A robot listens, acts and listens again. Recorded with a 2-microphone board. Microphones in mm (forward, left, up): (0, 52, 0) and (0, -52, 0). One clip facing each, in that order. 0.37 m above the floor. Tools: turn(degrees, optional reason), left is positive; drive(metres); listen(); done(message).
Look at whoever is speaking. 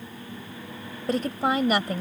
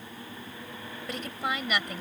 turn(degrees=40, reason="The woman speaking: about 40° left or 140° left.")
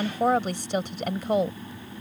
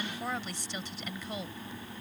turn(degrees=95, reason="So it is at 95° left.")
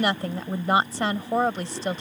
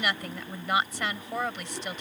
turn(degrees=40, reason="The woman speaking is now 40° left.")
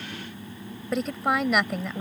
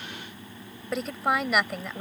done("Facing the woman speaking.")